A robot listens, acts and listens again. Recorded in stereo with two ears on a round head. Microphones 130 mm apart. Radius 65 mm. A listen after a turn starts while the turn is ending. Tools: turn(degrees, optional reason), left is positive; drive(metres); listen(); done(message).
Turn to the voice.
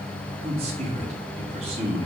turn(degrees=-45, reason="The man speaking: about 45° right or 135° right.")
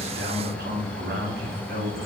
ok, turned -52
turn(degrees=-80, reason="So it is at 80° right.")
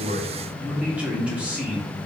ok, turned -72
turn(degrees=-10, reason="The man speaking is now 10° right.")
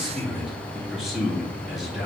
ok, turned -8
done("Found it: a man speaking, straight ahead.")